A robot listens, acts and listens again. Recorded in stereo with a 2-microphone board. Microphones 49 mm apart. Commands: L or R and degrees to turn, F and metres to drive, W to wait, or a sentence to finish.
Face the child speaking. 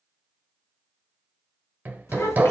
L90
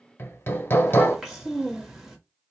Found it: a child speaking, straight ahead, 1 to 2 m away.